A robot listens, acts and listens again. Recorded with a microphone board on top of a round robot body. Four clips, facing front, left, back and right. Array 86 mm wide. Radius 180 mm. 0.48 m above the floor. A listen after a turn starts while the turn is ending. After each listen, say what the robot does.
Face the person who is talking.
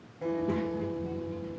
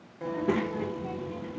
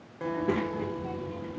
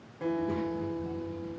Turn 125° left.
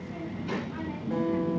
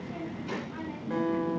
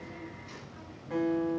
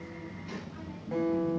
Turn 35° left.
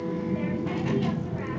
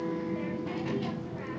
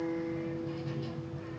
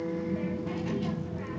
Facing the child speaking.